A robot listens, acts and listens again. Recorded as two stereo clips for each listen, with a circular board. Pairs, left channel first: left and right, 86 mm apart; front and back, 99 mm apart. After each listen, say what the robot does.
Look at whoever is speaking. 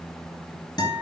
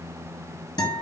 Keep listening.
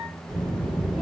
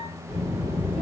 Turn 10° right.
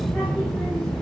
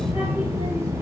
Found it: a child speaking, straight ahead, 1 to 2 m away.